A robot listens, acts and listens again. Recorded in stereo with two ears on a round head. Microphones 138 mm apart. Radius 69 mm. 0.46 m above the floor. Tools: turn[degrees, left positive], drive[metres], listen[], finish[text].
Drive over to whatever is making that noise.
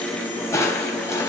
Thought: The crushing: about 20° left or 160° left.
Action: turn[20]
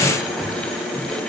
Action: drive[1.0]
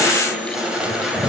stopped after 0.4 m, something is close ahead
Action: finish[Something is in my way. I am facing the crushing but have not reached it.]